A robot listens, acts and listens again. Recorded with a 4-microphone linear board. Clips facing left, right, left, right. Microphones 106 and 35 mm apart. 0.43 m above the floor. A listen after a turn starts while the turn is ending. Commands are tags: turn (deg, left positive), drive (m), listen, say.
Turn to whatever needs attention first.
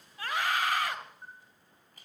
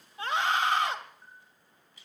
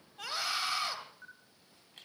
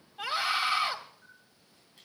<turn deg="-25"/>
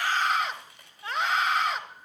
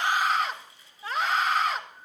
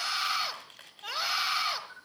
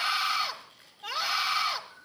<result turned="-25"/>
<say>Facing the scream.</say>